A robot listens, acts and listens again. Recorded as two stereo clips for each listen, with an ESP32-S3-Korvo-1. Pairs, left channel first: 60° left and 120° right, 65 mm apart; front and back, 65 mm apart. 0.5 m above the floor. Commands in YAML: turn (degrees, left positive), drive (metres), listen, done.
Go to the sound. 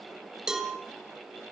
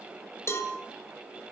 turn: -40
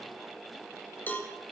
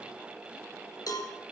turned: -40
drive: 1.0
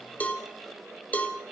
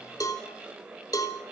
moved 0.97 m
drive: 1.0
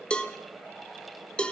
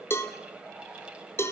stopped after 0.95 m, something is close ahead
done: "Arrived at the cowbell, straight ahead."